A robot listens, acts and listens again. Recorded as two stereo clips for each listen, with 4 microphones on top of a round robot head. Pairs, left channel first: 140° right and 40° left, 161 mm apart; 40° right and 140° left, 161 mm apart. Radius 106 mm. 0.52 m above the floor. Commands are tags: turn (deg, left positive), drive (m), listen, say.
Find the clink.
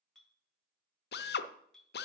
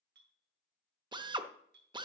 <turn deg="130"/>
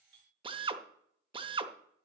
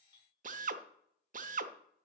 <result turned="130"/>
<turn deg="25"/>
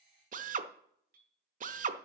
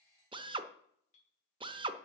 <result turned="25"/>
<say>Found it: a clink, straight ahead, 2 to 4 m away.</say>